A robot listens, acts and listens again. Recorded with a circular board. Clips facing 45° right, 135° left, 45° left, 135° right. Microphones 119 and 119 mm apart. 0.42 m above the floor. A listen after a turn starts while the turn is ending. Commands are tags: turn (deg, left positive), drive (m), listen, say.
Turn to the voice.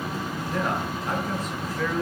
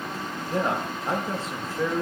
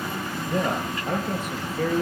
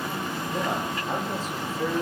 <turn deg="70"/>
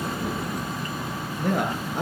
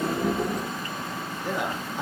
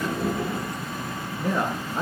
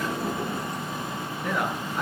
<turn deg="-15"/>
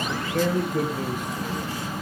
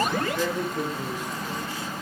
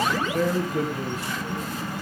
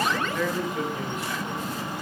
<turn deg="-10"/>
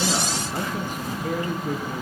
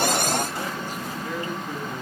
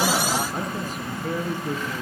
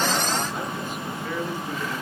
<say>Facing the man speaking.</say>